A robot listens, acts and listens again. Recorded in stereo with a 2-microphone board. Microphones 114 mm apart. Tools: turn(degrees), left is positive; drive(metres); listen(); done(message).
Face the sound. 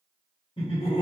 turn(degrees=55)
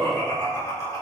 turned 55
turn(degrees=30)
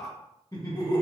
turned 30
turn(degrees=40)
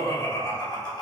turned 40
turn(degrees=40)
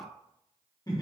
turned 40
turn(degrees=35)
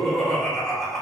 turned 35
done("Found it: laughter, straight ahead.")